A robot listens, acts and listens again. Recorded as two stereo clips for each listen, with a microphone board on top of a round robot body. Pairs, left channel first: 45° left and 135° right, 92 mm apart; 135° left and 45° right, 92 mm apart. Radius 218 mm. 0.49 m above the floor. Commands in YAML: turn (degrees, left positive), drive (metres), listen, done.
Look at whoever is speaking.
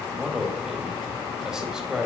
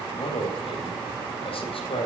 turn: 145
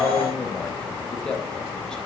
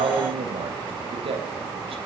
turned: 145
turn: -35
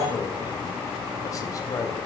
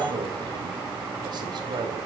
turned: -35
done: "Found it: a man speaking, straight ahead, 2 to 4 m away."